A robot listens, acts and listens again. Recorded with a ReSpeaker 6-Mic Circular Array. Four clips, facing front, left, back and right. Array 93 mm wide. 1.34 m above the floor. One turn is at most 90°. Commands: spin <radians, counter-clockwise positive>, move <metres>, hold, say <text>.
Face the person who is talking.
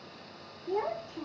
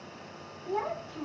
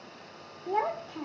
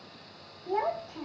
spin -1.57
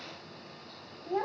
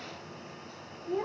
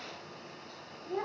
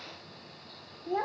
spin -1.13
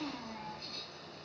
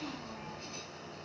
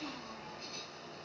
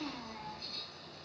spin -0.61
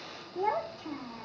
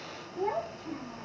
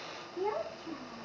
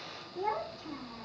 say Found it: a child speaking, straight ahead, under 1 m away.